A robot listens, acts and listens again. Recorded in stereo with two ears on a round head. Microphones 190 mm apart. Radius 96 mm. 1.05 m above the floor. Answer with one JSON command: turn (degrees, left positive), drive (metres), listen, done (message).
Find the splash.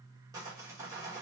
{"listen": true}
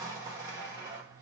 {"listen": true}
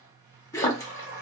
{"turn": 15}
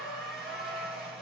{"listen": true}
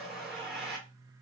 {"done": "I heard a splash, but can't make it out now. It was about straight ahead or 150° left."}